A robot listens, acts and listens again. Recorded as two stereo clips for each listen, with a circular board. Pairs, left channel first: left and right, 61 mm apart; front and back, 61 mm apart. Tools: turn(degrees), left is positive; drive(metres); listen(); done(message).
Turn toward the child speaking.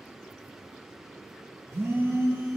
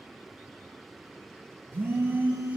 listen()
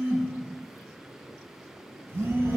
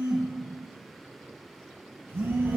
turn(degrees=-95)
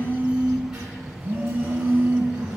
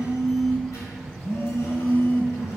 turn(degrees=-15)
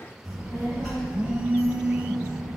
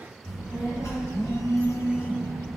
done("Found it: a child speaking, straight ahead, 2 to 4 m away.")